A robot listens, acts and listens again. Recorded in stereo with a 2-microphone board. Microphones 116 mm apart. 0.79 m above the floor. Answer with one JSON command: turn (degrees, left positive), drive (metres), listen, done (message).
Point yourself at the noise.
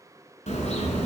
{"turn": 70}
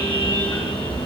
{"turn": 45}
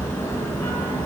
{"turn": 20}
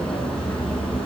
{"turn": 10}
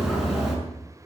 {"done": "Facing the car horn."}